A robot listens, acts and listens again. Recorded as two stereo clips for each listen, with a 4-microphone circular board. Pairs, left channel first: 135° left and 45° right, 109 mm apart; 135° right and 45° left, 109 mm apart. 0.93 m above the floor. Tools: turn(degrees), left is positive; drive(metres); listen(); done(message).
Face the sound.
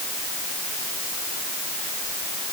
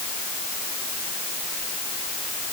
listen()
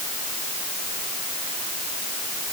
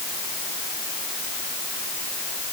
listen()
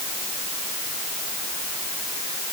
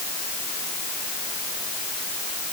done("I can't make out anything.")